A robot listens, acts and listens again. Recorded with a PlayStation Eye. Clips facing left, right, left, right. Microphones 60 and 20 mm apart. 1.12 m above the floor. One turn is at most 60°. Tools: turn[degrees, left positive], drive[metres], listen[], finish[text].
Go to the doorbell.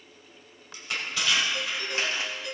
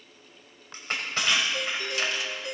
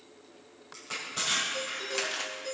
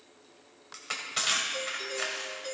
Thought: The doorbell: about 30° right or 150° right.
Action: turn[-30]
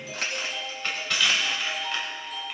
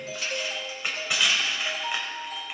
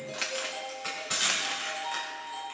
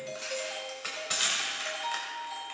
Thought: So it is at 120° right.
Action: turn[-60]
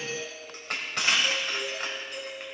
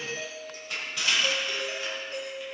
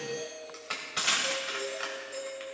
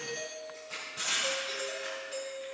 Thought: The doorbell is now 40° right.
Action: turn[-40]
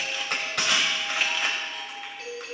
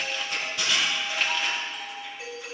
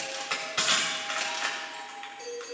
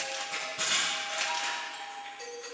Thought: The doorbell is now 15° right.
Action: turn[-15]
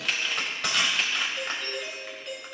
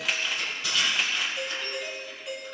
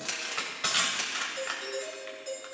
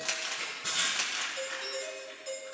Action: drive[1.0]
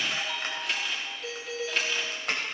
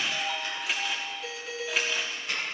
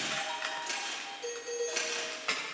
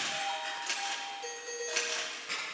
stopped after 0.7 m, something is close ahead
Action: finish[Something is in my way. I am facing the doorbell but have not reached it.]